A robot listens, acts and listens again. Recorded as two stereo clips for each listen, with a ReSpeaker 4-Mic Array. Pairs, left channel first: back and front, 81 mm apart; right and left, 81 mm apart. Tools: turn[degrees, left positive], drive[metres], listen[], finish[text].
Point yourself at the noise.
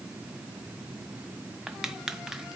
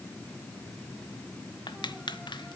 Thought: The crushing: 85° right.
Action: turn[-85]
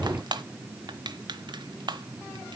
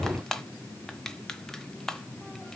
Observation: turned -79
Action: finish[Found it: crushing, straight ahead, under 1 m away.]